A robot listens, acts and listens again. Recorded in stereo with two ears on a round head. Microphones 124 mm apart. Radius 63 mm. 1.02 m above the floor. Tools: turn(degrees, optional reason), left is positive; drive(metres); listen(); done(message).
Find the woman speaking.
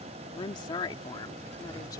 turn(degrees=35, reason="The woman speaking: about 35° left or 145° left.")
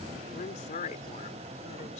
turn(degrees=120, reason="So it is at 120° left.")
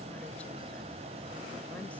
listen()
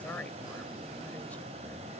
turn(degrees=10, reason="The woman speaking is now 10° left.")
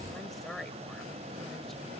done("Found it: a woman speaking, straight ahead.")